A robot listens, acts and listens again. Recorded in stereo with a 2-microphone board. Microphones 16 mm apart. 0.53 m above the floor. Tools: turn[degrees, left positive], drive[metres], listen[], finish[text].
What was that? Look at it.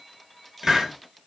Thought: The hiss: about 50° right or 130° right.
Action: turn[-50]
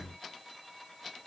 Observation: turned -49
Action: listen[]
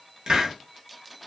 Thought: So it is at 80° right.
Action: turn[-80]
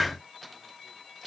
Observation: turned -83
Action: finish[Facing the hiss, under 1 m away.]